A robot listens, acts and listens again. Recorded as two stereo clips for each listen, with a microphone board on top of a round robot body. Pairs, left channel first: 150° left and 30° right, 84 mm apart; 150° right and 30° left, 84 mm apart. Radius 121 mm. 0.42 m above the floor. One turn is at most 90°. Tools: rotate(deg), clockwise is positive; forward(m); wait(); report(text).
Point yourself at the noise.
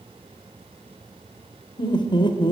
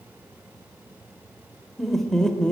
rotate(-90)
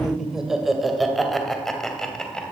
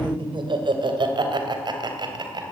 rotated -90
rotate(-65)
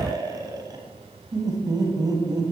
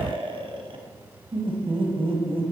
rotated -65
rotate(-15)
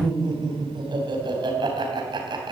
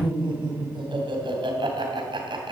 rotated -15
report("Facing the laughter.")